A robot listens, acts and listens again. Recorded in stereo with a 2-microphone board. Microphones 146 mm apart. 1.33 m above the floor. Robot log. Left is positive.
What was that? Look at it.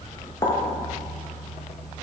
note: The pop: about 25° left or 155° left.
cmd yaw +25
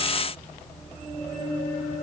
cmd idle
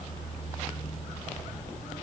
end: I heard a pop, but can't make it out now. It was about straight ahead or 130° left.